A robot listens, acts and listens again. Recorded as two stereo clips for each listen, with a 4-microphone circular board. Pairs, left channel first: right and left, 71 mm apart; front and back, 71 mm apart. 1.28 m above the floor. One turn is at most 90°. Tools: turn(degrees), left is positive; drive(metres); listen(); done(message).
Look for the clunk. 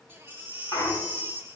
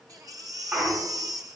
turn(degrees=-90)
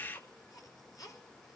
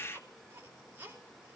turn(degrees=-20)
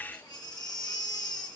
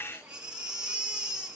done("Facing where the clunk came from. I can't hear it now.")